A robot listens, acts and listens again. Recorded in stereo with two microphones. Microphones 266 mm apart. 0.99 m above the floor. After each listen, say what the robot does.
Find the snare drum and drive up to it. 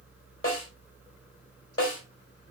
Turn 55° left.
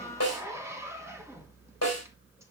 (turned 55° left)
Turn 70° left.
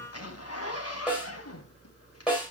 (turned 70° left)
Drive 1.0 m forward.
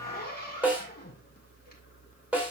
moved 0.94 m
Drive 1.0 m forward.
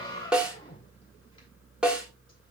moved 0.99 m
Drive 1.0 m forward.
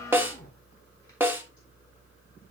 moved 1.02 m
Turn 10° right.
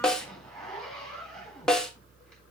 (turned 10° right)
Drive 1.0 m forward.
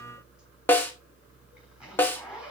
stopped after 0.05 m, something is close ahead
Turn 10° left.
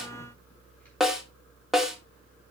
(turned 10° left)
I am next to the snare drum.